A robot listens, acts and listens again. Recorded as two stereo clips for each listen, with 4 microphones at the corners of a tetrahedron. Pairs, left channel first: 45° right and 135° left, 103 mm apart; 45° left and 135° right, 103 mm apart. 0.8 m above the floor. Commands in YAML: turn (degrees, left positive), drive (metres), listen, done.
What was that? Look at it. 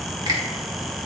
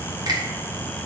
turn: 180
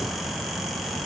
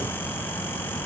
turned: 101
turn: 80
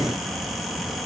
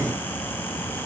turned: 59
turn: 20
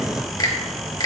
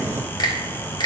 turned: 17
done: "Facing the finger snap, 1 to 2 m away."